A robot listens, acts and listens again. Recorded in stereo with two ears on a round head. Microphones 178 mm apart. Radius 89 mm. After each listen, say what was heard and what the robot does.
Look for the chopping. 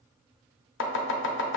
The chopping: about 65° left or 115° left. Turn 65° left.
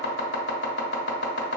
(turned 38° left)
So it is at 60° left. Turn 60° left.
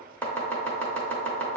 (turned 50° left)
The chopping is now 10° left. Turn 10° left.
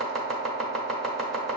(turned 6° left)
Found it: chopping, straight ahead.